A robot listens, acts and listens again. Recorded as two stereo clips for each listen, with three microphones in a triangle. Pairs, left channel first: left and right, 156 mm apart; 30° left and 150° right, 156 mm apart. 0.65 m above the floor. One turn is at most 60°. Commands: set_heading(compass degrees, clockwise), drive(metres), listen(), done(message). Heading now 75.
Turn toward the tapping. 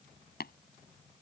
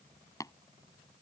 set_heading(15)
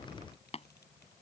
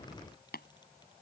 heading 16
set_heading(336)
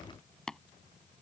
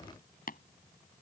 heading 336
done("Facing the tapping.")